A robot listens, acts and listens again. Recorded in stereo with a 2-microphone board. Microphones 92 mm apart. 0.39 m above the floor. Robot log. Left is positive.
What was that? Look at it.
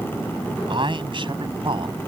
note: The man speaking: about 70° right or 110° right.
cmd yaw -70
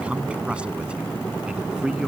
note: So it is at 10° right.
cmd yaw -10
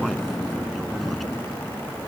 cmd idle
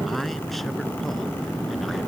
end: Found it: a man speaking, straight ahead.